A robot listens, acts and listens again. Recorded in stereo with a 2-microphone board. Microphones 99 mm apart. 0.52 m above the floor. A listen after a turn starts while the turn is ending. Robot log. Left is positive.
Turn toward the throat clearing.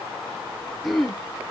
cmd yaw +30
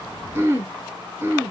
note: So it is at 30° right.
cmd yaw -30
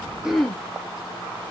end: Found it: throat clearing, straight ahead.